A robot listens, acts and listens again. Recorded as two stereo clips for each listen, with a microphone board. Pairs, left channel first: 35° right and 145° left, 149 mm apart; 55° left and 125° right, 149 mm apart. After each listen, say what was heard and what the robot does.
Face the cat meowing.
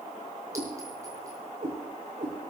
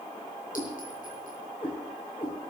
The cat meowing: 115° left. Turn 115° left.
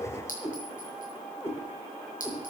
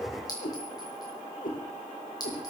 The cat meowing is now 40° left. Turn 40° left.
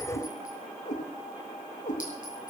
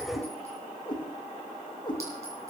Found it: a cat meowing, straight ahead.